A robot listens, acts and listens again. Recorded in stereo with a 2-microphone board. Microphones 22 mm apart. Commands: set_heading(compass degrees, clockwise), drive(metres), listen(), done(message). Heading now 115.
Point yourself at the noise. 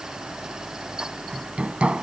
set_heading(180)
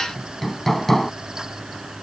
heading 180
done("Facing the hammering.")